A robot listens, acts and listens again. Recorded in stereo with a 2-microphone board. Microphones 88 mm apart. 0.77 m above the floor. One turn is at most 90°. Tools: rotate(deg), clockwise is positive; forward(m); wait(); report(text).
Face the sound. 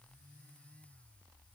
wait()
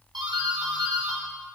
rotate(60)
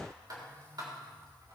rotate(55)
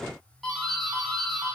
report("Found it: a doorbell, straight ahead.")